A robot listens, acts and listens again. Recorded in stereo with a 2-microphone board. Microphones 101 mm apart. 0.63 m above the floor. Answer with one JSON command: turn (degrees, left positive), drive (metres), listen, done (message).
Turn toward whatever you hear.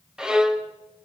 {"turn": -30}
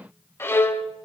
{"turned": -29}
{"turn": 25}
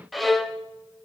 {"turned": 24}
{"done": "Facing the violin, 1 to 2 m away."}